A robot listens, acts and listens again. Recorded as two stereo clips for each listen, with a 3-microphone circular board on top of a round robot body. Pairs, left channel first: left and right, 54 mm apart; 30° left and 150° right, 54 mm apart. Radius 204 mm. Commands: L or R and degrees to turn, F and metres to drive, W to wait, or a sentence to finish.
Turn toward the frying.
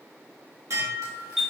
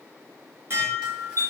W
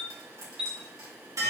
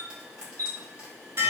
R75
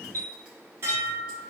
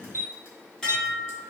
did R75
W
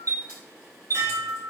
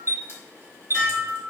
W
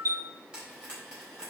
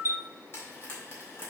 R15
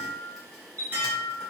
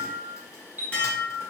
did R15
W
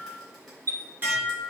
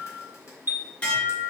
W
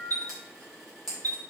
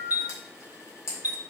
Found it: frying, straight ahead, 2 to 4 m away.